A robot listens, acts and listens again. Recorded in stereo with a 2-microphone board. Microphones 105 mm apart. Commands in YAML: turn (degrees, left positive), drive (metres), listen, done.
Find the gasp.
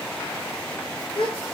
turn: 55
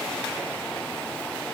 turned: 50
listen: true
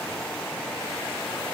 done: "I heard a gasp, but can't make it out now. It was about 5° left or 75° left."